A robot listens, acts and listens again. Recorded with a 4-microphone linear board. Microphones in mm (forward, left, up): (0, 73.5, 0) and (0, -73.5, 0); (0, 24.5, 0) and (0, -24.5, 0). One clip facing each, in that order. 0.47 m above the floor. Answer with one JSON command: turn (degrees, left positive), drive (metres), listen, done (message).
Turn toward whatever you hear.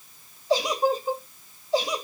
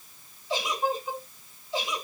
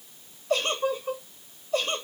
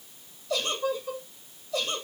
{"turn": 40}
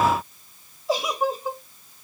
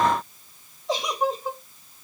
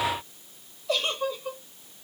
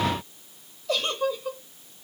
{"done": "Found it: a giggle, straight ahead."}